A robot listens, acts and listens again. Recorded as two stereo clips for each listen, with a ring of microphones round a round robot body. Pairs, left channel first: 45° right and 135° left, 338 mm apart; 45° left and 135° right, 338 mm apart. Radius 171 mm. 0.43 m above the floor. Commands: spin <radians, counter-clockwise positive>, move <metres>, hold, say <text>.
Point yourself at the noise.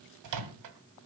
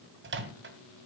spin 2.97
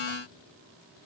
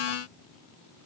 hold
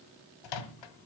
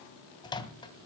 spin -0.52
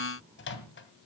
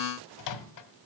spin 0.17
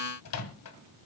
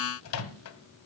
say Found it: a microwave, straight ahead.